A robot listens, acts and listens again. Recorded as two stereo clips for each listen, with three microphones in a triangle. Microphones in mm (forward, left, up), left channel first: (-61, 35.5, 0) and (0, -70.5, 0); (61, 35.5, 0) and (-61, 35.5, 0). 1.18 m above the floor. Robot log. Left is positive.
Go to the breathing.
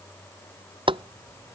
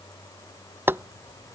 cmd idle
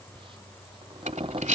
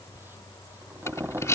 note: The breathing: 65° right.
cmd yaw -65
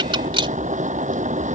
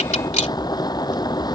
note: The breathing is now 15° right.
cmd yaw -15
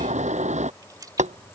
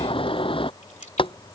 cmd idle
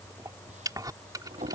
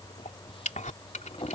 cmd fwd 1.0
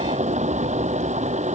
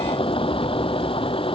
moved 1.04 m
cmd idle
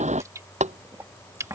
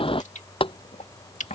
cmd fwd 1.0
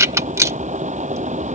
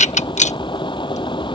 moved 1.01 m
cmd fwd 1.0
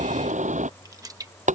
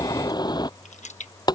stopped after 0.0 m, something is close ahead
cmd idle
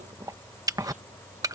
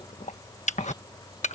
end: I am next to the breathing.